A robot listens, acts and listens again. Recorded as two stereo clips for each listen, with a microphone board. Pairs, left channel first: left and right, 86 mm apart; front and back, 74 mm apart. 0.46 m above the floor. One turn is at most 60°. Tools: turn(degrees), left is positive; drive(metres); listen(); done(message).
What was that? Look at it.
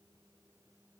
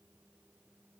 listen()
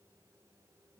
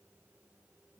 listen()
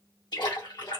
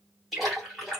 turn(degrees=60)
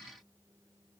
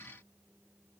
turn(degrees=30)
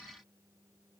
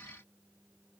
done("Facing where the splash came from. I can't hear it now.")